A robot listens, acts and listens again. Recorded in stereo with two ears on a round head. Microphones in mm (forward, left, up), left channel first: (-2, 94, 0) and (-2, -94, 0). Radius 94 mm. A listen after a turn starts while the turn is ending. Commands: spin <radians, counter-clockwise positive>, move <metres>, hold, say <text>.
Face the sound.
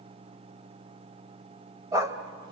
spin -0.26
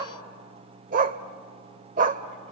spin -0.70
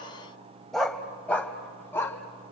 spin 0.26
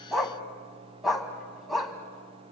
say Facing the dog barking.